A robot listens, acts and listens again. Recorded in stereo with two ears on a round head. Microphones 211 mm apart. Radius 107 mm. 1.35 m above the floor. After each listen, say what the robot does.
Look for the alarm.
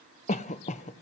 Keep listening.
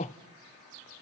Keep listening.
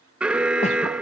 Turn 30° right.
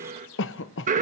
Turn 145° right.
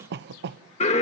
Turn 30° left.
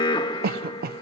Turn 20° left.
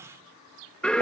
Facing the alarm.